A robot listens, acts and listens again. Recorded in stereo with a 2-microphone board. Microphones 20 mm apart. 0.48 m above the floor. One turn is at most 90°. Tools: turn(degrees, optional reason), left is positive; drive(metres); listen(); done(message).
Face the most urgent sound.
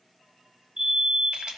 turn(degrees=-55, reason="The fire alarm: about 55° right or 125° right.")
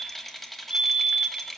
turn(degrees=-55, reason="So it is at 55° right.")
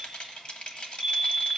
done("Facing the fire alarm, 2 to 4 m away.")